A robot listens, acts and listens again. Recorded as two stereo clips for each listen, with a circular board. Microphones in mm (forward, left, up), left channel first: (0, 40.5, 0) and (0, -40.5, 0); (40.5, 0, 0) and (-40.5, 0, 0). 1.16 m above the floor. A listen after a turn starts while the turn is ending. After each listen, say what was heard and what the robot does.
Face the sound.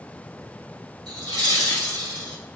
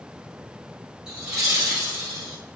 The laughter: 90° right. Turn 90° right.
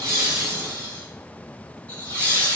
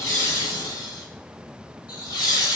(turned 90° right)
The laughter is now 20° left. Turn 20° left.
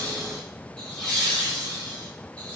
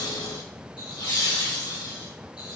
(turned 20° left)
The laughter is now 15° left. Turn 15° left.
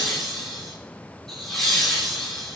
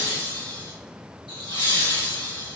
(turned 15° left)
Found it: laughter, straight ahead, 2 to 4 m away.